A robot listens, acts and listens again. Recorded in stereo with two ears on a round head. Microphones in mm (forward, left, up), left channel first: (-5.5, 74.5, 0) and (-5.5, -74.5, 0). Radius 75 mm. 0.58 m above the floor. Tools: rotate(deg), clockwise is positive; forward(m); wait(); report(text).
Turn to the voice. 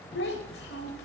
rotate(-75)
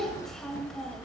report("Facing the child speaking.")